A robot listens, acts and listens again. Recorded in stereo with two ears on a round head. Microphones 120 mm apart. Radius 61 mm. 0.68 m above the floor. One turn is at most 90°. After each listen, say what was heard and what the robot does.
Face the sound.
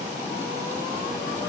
Keep listening.
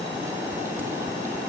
Keep listening.
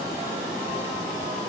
I can't make out anything.